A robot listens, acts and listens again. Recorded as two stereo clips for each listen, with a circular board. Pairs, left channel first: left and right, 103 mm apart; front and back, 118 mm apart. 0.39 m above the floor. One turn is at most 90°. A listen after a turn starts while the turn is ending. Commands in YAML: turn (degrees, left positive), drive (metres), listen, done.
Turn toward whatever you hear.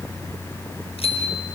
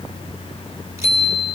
turn: 90
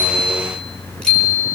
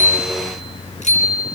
done: "Facing the bicycle bell."